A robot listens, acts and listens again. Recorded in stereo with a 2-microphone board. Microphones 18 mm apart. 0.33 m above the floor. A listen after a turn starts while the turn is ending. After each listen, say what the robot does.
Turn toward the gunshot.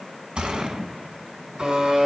Turn 70° right.
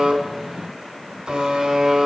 Keep listening.
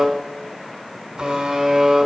I heard a gunshot, but can't make it out now. It was about straight ahead or 40° right.